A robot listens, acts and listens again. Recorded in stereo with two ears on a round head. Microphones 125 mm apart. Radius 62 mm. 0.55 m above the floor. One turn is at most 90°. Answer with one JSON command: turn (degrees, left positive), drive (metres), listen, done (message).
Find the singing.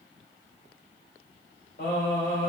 {"turn": 75}
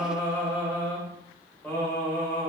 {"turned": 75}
{"turn": 15}
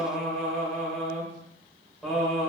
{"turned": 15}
{"done": "Facing the singing, 1 to 2 m away."}